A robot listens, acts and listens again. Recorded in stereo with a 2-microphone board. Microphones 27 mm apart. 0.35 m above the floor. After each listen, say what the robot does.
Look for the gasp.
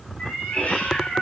Keep listening.
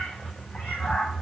Keep listening.
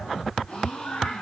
Turn 40° left.
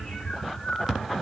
Keep listening.
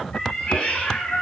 I heard a gasp, but can't make it out now. It was about straight ahead or 100° left.